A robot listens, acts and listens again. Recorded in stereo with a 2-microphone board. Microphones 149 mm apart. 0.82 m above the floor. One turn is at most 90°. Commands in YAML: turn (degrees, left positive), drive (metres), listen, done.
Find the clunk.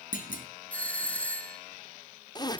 turn: 65
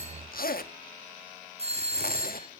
listen: true
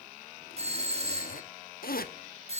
done: "I heard a clunk, but can't make it out now. It was about straight ahead or 50° left."